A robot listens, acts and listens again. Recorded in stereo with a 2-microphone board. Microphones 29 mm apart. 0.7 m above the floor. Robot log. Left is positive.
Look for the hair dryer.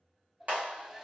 note: The hair dryer: about 20° right or 160° right.
cmd yaw -20
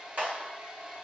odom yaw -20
note: So it is at 140° right.
cmd yaw -140
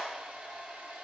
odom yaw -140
note: The hair dryer is now 50° right.
cmd yaw -50
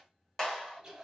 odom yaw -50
note: The hair dryer is now 20° right.
cmd yaw -20
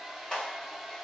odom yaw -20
end: Facing the hair dryer, 1 to 2 m away.